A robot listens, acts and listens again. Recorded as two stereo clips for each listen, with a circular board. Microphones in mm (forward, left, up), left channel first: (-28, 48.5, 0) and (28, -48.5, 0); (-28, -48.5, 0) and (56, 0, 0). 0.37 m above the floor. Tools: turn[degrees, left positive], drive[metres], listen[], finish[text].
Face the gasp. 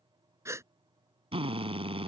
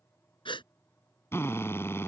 Thought: The gasp: 125° right.
Action: turn[-125]
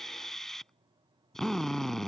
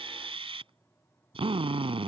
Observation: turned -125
Action: finish[I heard a gasp from this way, but can't make it out now.]